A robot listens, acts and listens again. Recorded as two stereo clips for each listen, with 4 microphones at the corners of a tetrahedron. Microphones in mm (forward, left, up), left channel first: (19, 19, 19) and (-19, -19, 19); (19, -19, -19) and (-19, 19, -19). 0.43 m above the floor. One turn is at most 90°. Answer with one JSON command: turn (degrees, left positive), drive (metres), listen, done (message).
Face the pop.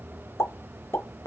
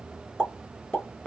{"turn": 25}
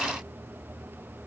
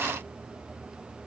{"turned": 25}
{"done": "Facing where the pop came from. I can't hear it now."}